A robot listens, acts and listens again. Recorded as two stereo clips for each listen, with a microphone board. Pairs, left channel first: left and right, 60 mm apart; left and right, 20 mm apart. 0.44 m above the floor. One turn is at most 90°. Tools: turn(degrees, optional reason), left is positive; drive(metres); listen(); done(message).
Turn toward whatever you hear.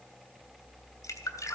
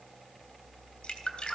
turn(degrees=60, reason="The dripping: about 60° left or 120° left.")
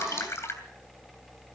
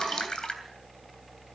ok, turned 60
turn(degrees=50, reason="So it is at 50° left.")
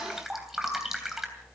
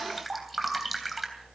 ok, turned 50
done("Facing the dripping.")